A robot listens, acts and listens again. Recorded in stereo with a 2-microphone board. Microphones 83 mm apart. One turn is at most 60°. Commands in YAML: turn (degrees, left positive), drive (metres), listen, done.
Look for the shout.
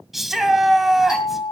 turn: 30
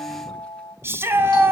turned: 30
turn: -30
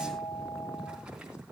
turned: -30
listen: true
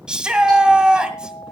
turn: -10
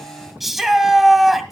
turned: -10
done: "Facing the shout."